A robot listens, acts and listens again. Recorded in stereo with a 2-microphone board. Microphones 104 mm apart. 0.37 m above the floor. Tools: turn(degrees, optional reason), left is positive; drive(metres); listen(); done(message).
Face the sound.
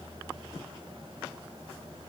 listen()
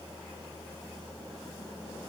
listen()
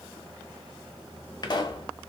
turn(degrees=45, reason="The pop: about 45° left or 135° left.")
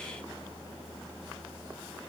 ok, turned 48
listen()
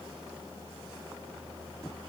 done("I heard a pop, but can't make it out now. It was about 5° right or 90° left.")